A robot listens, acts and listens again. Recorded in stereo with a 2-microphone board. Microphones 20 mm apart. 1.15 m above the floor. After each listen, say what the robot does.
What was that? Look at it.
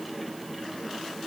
Keep listening.
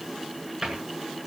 Turn 30° right.
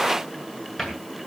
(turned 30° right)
Turn 25° left.
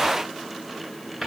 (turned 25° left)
Facing the cupboard door, over 4 m away.